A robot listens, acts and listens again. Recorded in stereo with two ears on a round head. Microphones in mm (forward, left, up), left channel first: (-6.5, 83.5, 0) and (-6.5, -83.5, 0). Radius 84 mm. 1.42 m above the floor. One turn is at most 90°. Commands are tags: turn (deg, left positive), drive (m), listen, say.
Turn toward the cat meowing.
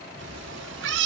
<turn deg="-65"/>
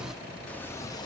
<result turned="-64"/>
<listen/>
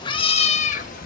<turn deg="50"/>
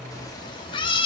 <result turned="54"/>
<turn deg="30"/>
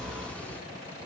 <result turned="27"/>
<listen/>
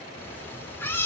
<turn deg="10"/>
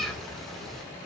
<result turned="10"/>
<say>Facing the cat meowing, 2 to 4 m away.</say>